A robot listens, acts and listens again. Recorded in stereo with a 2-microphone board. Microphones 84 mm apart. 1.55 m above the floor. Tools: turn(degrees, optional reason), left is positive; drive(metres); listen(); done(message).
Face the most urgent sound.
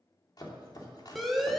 turn(degrees=30)
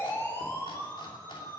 turn(degrees=150, reason="So it is at 150° left.")
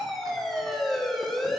done("Found it: a siren, straight ahead.")